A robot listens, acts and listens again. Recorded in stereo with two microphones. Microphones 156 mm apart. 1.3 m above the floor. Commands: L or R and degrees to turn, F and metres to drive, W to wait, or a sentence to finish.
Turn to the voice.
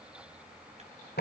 W
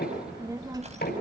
R25
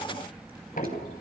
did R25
Facing the child speaking.